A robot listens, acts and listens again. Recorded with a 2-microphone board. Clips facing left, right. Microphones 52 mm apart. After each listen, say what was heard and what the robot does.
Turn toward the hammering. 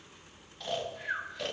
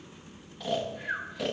Keep listening.
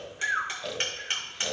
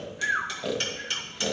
The hammering: about 35° left or 145° left. Turn 35° left.
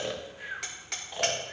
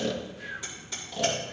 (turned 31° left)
So it is at 110° left. Turn 110° left.
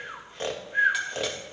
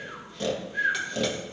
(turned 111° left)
Keep listening.
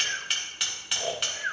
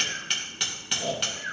Facing the hammering, 2 to 4 m away.